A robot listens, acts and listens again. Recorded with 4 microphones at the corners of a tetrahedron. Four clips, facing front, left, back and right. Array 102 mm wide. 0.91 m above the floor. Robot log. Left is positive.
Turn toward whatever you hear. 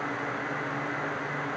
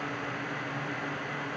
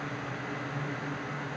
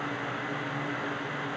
cmd idle
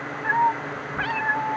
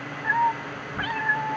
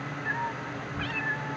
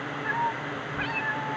note: The cat meowing: 25° left.
cmd yaw +25
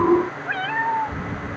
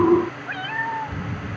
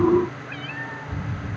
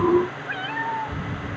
end: Found it: a cat meowing, straight ahead.